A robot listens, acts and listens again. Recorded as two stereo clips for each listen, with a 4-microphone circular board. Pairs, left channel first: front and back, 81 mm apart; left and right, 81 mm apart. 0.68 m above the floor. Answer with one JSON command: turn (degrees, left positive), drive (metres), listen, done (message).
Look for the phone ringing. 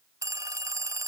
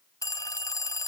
{"turn": 135}
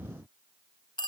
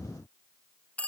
{"turn": 20}
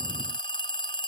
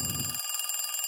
{"done": "Found it: a phone ringing, straight ahead."}